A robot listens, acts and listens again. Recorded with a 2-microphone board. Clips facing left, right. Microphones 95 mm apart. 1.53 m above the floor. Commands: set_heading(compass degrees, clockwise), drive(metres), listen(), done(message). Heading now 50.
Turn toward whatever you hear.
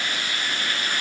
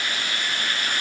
listen()
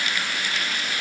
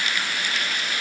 listen()
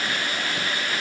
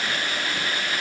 done("I can't make out anything.")